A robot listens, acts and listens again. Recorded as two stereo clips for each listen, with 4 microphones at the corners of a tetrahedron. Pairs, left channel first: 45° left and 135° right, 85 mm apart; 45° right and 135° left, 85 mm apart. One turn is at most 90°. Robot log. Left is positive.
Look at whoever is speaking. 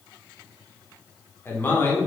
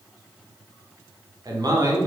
note: The man speaking: 105° left.
cmd yaw +90
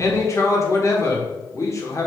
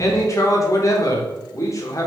end: Facing the man speaking.